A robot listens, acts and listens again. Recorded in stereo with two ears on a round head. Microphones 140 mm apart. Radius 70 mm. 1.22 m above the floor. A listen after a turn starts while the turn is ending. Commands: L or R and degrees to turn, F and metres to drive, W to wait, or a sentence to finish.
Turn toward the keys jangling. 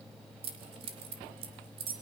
R35
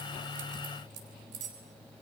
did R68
R80
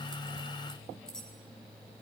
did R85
W
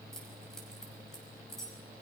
W
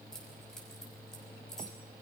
Facing where the keys jangling came from. I can't hear it now.